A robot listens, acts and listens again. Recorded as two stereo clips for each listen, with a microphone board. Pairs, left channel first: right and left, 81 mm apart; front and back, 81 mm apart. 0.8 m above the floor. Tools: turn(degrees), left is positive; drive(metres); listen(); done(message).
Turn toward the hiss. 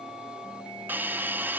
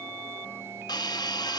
turn(degrees=25)
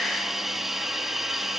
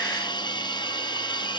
done("Found it: a hiss, straight ahead, under 1 m away.")